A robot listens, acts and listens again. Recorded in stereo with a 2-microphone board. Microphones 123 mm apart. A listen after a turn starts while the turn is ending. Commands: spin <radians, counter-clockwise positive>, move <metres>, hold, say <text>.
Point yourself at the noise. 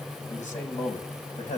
spin 1.57
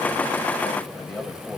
spin 0.17
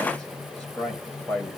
spin 0.17
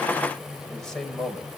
say Found it: a man speaking, straight ahead.